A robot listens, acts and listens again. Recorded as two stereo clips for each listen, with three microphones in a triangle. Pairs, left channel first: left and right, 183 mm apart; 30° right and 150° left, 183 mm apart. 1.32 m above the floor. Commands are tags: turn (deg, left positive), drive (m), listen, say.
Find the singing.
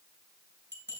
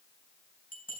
<listen/>
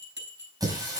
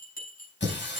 <turn deg="-20"/>
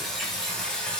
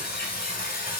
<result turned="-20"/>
<say>Found it: singing, straight ahead.</say>